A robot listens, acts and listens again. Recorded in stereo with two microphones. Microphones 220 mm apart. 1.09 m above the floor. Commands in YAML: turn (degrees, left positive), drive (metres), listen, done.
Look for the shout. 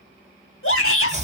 turn: 70
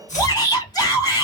turn: 20
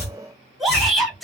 done: "Facing the shout, 2 to 4 m away."